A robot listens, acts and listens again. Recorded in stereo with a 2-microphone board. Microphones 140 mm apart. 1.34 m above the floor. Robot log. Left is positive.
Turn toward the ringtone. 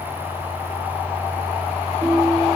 cmd yaw -30
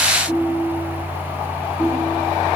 note: So it is at 25° left.
cmd yaw +25
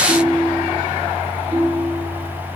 note: The ringtone is now 10° right.
cmd yaw -10
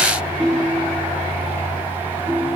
end: Facing the ringtone, 2 to 4 m away.